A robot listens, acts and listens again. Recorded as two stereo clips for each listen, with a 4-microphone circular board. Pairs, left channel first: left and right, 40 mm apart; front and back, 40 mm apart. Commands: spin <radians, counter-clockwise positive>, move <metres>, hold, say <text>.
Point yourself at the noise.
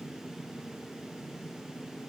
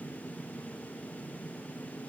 hold
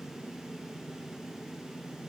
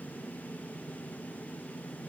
hold
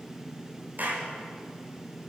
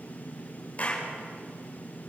spin -0.96
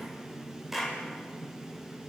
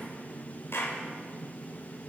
spin -0.17
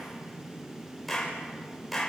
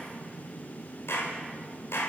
say Found it: a clap, straight ahead.